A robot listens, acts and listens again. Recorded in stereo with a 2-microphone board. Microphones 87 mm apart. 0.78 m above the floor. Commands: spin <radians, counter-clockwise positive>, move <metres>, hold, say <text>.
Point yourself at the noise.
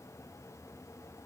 hold
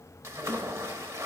spin -0.61
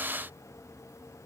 hold
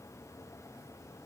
say I heard a splash, but can't make it out now. It was about straight ahead or 110° right.